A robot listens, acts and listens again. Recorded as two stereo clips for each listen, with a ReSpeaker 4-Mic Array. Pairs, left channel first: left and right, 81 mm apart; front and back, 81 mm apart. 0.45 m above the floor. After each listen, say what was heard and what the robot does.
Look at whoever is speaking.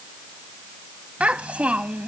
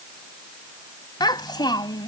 The child speaking: 15° right. Turn 15° right.
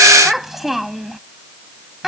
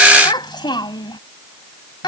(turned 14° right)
Facing the child speaking.